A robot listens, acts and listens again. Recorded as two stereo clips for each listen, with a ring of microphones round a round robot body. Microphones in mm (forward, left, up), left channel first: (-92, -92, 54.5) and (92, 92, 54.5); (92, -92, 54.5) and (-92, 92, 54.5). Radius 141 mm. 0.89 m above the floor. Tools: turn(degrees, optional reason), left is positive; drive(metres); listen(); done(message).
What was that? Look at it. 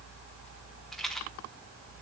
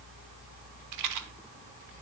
turn(degrees=135, reason="The rattle: 135° left.")
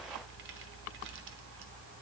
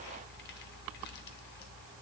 listen()
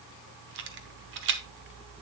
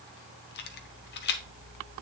done("Facing the rattle.")